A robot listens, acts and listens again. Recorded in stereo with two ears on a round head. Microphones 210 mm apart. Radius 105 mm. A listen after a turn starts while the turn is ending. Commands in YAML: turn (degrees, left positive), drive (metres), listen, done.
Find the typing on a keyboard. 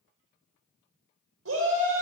listen: true
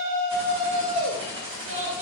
turn: -25
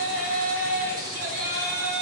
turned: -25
listen: true
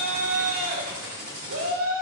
turn: -125
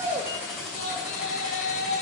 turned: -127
done: "Found it: typing on a keyboard, straight ahead, 2 to 4 m away."